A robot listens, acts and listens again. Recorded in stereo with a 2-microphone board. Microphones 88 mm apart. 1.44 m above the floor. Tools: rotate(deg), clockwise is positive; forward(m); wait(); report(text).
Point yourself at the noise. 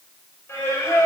rotate(-30)
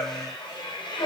rotate(-120)
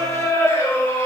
rotate(-25)
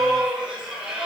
rotate(10)
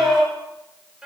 report("Facing the singing.")